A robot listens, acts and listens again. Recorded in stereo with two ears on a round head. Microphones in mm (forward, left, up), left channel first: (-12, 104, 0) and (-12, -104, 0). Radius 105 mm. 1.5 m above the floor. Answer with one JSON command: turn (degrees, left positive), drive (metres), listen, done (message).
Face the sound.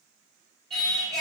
{"turn": 30}
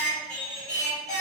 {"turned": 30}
{"turn": 145}
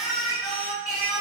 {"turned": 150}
{"done": "Found it: singing, straight ahead."}